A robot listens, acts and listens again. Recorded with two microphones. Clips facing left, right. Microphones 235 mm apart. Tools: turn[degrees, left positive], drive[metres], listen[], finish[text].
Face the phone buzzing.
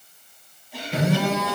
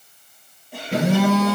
Action: turn[-90]
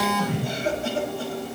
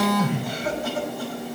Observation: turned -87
Thought: So it is at 15° right.
Action: turn[-15]
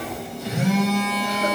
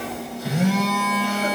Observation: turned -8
Action: finish[Facing the phone buzzing.]